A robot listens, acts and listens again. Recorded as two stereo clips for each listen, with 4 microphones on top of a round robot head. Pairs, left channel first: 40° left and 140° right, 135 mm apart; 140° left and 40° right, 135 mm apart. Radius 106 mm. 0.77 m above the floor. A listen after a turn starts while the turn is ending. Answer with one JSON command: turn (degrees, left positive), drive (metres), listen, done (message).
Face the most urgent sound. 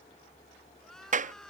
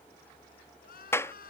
{"turn": 125}
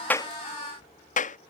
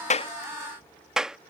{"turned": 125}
{"listen": true}
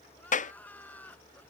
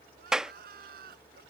{"turn": -40}
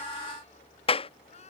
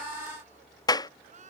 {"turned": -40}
{"done": "Facing the crying."}